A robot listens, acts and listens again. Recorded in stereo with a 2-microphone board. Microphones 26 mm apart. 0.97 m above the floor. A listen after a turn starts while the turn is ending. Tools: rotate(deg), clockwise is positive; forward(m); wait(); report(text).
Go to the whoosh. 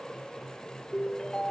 wait()
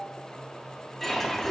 rotate(-30)
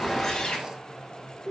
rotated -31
rotate(-145)
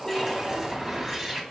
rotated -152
rotate(10)
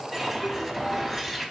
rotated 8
forward(1.0)
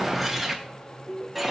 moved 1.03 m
forward(1.0)
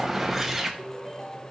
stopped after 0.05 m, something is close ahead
rotate(10)
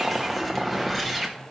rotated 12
report("I am next to the whoosh.")